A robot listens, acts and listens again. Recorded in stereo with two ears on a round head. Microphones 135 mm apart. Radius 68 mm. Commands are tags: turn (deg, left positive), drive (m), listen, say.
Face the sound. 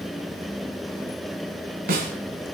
<turn deg="-65"/>
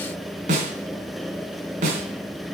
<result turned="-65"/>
<turn deg="-50"/>
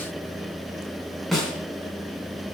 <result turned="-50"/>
<say>Found it: a snare drum, straight ahead.</say>